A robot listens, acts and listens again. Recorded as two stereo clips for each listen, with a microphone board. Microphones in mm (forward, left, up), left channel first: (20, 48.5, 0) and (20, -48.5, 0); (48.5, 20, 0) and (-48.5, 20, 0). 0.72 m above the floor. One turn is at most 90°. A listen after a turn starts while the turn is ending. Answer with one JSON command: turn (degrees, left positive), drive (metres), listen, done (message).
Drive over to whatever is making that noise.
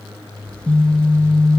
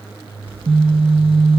{"turn": 90}
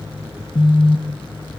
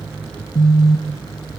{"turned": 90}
{"turn": 55}
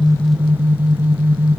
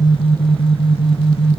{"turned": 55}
{"turn": -20}
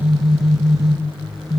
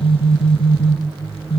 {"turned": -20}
{"drive": 1.0}
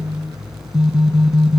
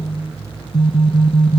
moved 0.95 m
{"drive": 1.0}
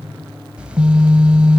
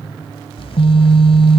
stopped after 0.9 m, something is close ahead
{"turn": -10}
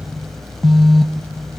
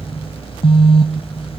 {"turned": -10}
{"done": "Arrived at the phone buzzing, straight ahead."}